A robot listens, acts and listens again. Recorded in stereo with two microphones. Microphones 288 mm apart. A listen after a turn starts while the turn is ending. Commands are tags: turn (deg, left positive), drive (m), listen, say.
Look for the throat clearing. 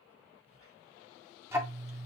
<listen/>
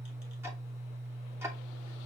<listen/>
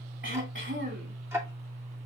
<turn deg="-40"/>
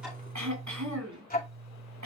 <turn deg="-100"/>
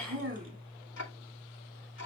<listen/>
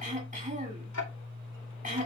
<turn deg="-25"/>
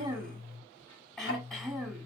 <say>Facing the throat clearing, 2 to 4 m away.</say>